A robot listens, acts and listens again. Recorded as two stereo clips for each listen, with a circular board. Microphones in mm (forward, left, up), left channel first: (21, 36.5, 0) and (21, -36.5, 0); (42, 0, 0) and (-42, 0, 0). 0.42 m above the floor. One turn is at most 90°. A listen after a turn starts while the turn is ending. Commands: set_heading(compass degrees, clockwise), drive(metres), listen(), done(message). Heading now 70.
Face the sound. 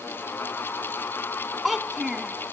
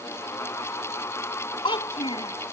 done("Found it: a child speaking, straight ahead.")